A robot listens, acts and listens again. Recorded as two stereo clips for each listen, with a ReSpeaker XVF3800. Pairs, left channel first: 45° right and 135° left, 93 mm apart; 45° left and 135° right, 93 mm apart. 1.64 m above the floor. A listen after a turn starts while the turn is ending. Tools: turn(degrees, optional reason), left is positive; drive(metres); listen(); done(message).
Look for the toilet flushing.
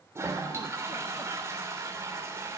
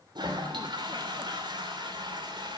turn(degrees=-165, reason="The toilet flushing: 165° right.")
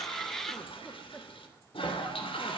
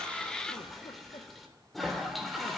turn(degrees=-45, reason="The toilet flushing is now 45° right.")
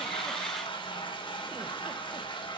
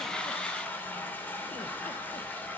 turn(degrees=-25, reason="The toilet flushing is now 25° right.")
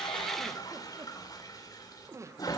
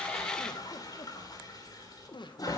done("Found it: a toilet flushing, straight ahead, 2 to 4 m away.")